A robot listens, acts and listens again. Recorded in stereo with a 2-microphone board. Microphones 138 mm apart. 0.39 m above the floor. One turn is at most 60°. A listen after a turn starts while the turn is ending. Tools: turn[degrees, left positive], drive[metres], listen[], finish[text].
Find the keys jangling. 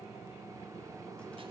Action: listen[]
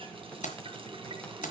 Thought: The keys jangling: about 70° left or 110° left.
Action: turn[60]
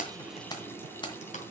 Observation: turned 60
Thought: So it is at 35° left.
Action: turn[35]
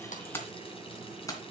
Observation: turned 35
Thought: The keys jangling is now 25° left.
Action: turn[25]
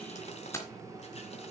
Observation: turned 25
Thought: The keys jangling is now 20° left.
Action: turn[20]
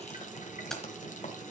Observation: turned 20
Action: finish[Found it: keys jangling, straight ahead, 2 to 4 m away.]